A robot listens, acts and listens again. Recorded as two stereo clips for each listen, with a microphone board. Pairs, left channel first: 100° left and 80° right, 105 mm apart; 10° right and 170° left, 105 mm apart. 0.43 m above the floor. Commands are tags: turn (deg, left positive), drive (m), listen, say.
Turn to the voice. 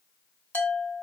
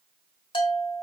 <listen/>
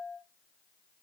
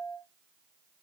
<listen/>
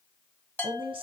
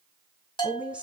<turn deg="-110"/>
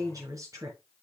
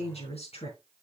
<turn deg="-20"/>
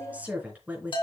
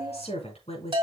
<say>Facing the woman speaking.</say>